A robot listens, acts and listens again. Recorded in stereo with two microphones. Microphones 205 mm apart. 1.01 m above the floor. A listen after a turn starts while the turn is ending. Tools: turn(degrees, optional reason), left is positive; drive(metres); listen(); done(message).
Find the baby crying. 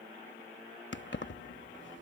listen()
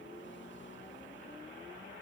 listen()
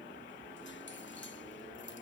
done("I can't make out a baby crying to turn to.")